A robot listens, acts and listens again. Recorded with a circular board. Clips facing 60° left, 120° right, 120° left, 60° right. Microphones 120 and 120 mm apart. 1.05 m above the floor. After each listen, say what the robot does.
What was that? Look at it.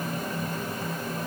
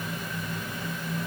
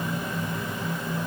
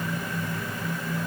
Keep listening.
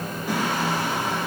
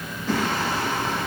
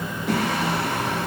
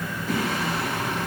Turn 140° left.
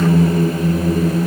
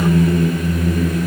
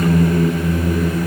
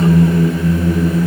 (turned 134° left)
Facing the singing, over 4 m away.